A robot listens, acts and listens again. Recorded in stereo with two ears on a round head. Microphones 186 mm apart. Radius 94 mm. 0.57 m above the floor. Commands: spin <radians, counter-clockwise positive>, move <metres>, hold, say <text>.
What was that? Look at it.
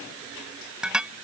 spin -0.52
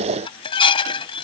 spin 0.44
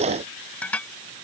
say Facing the dishes clattering.